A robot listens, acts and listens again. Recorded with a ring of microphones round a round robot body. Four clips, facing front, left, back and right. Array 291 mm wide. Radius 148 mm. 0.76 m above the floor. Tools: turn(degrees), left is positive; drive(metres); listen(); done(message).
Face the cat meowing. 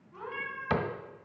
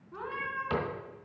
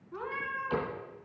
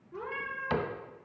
turn(degrees=135)
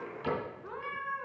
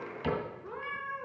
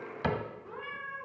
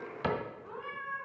done("Found it: a cat meowing, straight ahead.")